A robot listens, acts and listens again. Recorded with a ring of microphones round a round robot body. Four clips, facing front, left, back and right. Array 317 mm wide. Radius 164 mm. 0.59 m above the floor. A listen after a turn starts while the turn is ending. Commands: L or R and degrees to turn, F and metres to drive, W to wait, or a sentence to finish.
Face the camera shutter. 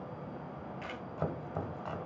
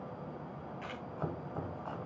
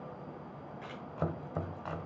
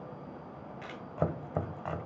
R40
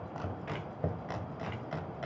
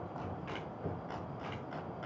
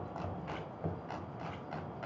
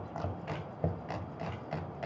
W
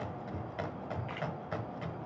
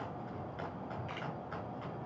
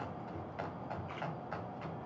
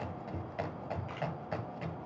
L10
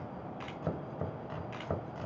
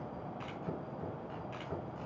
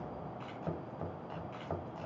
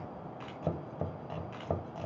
Facing the camera shutter.